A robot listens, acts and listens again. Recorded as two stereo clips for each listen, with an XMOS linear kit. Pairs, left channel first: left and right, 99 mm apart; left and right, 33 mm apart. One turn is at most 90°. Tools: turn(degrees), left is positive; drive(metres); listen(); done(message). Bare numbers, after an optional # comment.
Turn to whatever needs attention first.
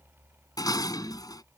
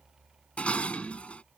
listen()
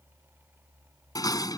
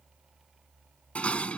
listen()
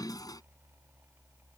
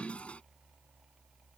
done("I can't make out anything urgent, only dishes clattering.")